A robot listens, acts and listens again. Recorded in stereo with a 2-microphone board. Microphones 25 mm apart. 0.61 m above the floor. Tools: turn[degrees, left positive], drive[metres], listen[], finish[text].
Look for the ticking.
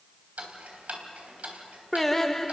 Thought: The ticking: about 70° right or 110° right.
Action: turn[-70]
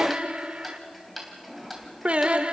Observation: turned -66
Action: finish[Facing the ticking, 2 to 4 m away.]